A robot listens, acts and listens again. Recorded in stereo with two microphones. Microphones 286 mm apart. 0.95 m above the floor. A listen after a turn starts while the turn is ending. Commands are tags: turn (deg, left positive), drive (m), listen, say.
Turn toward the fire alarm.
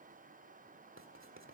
<listen/>
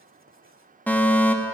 <turn deg="30"/>
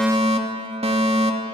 <turn deg="-25"/>
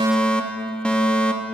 <say>Found it: a fire alarm, straight ahead, 2 to 4 m away.</say>